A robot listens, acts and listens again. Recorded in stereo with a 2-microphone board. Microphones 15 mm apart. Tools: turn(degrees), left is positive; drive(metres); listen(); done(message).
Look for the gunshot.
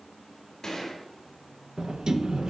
turn(degrees=55)
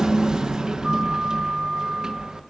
listen()
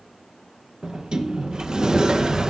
done("I heard a gunshot, but can't make it out now. It was about straight ahead or 70° left.")